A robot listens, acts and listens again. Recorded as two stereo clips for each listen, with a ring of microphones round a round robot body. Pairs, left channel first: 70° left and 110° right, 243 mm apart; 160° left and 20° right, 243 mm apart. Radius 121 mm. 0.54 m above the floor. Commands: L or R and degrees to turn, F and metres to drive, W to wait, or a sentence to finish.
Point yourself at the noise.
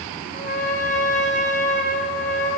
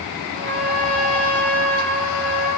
Facing the trumpet.